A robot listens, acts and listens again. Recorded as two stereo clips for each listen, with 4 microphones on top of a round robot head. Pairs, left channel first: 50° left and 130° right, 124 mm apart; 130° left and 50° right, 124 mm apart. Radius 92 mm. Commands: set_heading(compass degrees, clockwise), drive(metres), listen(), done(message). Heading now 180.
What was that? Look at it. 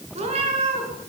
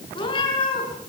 set_heading(355)
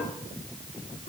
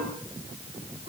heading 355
listen()
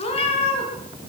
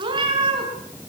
done("Facing the cat meowing.")